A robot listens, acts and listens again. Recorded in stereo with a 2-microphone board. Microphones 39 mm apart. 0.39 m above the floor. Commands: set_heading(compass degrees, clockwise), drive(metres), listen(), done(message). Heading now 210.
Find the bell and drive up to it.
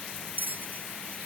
set_heading(275)
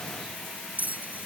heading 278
set_heading(323)
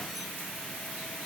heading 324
listen()
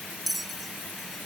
drive(1.0)
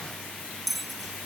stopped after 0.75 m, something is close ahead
done("Blocked. The bell is further on, straight ahead.")